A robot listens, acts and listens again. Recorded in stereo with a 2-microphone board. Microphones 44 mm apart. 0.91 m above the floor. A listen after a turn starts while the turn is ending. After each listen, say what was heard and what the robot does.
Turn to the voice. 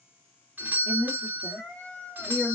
Turn 30° right.
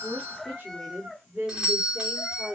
So it is at 145° right. Turn 145° right.
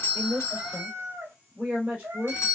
The woman speaking is now 40° right. Turn 40° right.
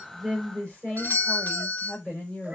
The woman speaking is now 10° left. Turn 10° left.
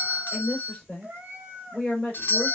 Facing the woman speaking, 2 to 4 m away.